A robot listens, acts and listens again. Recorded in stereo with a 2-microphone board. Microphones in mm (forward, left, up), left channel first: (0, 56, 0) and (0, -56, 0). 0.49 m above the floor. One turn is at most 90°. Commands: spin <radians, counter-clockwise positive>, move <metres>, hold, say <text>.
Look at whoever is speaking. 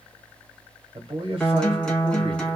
spin -0.96
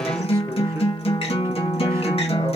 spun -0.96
hold
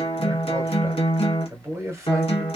spin -0.52
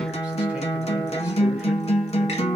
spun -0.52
hold
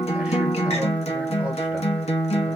hold
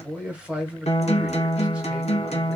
spin -0.26
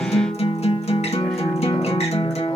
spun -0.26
hold
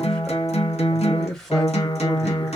say Facing the man speaking.